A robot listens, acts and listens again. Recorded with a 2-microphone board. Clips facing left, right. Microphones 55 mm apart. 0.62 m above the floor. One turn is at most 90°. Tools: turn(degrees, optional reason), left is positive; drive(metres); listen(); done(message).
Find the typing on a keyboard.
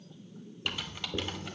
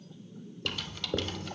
turn(degrees=20, reason="The typing on a keyboard: about 20° left or 160° left.")
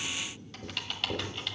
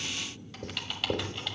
done("Facing the typing on a keyboard, 1 to 2 m away.")